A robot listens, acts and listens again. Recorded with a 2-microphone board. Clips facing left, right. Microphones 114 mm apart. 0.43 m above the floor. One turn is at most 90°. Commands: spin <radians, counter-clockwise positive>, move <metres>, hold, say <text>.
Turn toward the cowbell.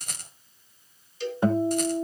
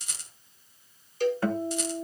spin -0.87
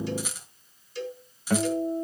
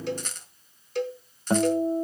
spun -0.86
spin -1.40
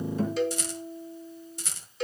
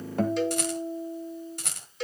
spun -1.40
say Found it: a cowbell, straight ahead.